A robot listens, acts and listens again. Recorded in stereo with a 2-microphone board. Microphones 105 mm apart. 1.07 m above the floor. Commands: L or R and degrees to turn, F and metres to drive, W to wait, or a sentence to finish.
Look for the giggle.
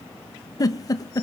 L35
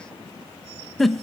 Found it: a giggle, straight ahead, 1 to 2 m away.